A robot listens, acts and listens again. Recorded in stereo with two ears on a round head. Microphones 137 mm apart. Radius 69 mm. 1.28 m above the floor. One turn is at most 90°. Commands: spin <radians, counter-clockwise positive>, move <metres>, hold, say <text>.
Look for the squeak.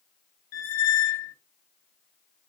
spin 0.96
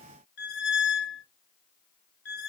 spin 1.22
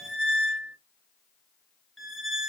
say Facing the squeak.